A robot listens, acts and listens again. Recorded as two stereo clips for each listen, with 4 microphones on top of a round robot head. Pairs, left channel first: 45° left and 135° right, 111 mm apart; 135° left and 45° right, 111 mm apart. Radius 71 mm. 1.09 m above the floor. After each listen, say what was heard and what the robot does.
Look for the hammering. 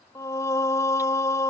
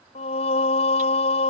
Keep listening.
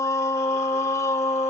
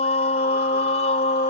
Keep listening.
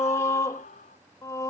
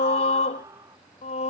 I can't make out hammering, only singing and a scream.